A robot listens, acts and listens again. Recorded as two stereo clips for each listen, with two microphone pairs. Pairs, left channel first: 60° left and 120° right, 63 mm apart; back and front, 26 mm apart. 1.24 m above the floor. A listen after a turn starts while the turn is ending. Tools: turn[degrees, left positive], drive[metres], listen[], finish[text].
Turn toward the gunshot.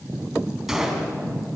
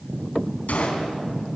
Thought: The gunshot: 155° left.
Action: turn[155]
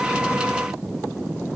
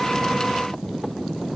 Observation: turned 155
Action: finish[I heard a gunshot from this way, but can't make it out now.]